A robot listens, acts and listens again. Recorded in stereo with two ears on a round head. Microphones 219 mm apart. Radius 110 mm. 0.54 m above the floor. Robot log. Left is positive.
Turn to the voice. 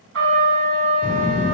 note: The child speaking: about 35° left or 145° left.
cmd yaw +35
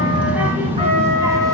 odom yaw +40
note: So it is at 15° right.
cmd yaw -15
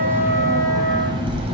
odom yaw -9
note: The child speaking is now 25° right.
cmd yaw -25
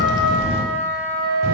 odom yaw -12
note: The child speaking is now 40° right.
cmd yaw -40
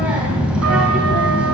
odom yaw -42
end: Found it: a child speaking, straight ahead, 1 to 2 m away.